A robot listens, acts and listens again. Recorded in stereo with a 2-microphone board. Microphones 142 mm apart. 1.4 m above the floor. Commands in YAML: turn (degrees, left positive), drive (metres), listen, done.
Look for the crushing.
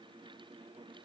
listen: true
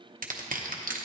turn: -75
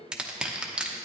done: "Facing the crushing."